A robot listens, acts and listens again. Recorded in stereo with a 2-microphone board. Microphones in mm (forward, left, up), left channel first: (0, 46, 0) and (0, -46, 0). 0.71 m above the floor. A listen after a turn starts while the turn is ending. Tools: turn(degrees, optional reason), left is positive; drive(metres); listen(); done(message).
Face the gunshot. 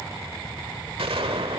turn(degrees=-90)
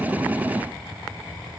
done("Facing where the gunshot came from. I can't hear it now.")